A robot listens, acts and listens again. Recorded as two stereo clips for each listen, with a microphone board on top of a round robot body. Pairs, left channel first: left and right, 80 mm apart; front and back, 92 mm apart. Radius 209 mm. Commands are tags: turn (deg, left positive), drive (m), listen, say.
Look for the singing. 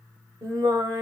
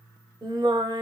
<turn deg="-130"/>
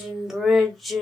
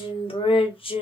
<say>Found it: singing, straight ahead.</say>